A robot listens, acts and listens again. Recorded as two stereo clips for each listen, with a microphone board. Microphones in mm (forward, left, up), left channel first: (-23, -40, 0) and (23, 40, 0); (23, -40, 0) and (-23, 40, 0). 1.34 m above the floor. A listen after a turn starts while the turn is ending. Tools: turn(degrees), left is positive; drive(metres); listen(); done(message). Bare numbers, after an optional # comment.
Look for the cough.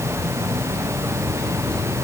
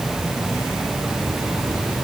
listen()
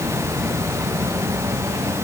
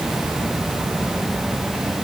listen()
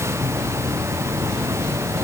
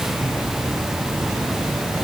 done("I can't make out a cough.")